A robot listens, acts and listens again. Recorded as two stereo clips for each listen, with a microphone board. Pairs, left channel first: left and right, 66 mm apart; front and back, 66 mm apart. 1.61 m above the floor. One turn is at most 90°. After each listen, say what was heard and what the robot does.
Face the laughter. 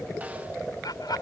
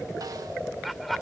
The laughter: 90° left. Turn 90° left.
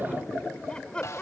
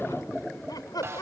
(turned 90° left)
The laughter is now 15° left. Turn 15° left.
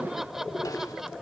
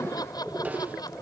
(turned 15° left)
Found it: laughter, straight ahead.